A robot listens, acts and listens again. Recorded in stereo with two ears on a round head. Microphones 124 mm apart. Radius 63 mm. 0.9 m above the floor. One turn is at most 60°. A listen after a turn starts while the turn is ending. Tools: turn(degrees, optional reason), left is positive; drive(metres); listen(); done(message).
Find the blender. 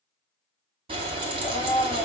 turn(degrees=30)
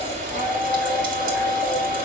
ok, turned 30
turn(degrees=-20, reason="So it is at 20° right.")
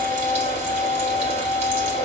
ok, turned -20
done("Facing the blender, 2 to 4 m away.")